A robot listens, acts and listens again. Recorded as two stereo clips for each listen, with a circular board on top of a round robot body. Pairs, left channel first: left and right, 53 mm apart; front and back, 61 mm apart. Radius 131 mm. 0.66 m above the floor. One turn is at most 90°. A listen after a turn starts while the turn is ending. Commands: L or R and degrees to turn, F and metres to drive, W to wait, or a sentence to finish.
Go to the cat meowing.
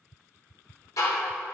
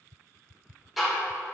W
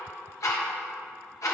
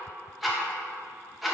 W
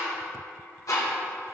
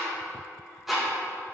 I can't make out a cat meowing to turn to.